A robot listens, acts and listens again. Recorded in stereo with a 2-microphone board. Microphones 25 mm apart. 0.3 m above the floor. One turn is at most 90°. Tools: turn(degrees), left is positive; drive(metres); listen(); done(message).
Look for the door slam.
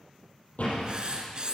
turn(degrees=60)
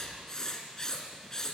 listen()
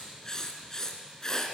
done("I heard a door slam, but can't make it out now. It was about straight ahead or 60° left.")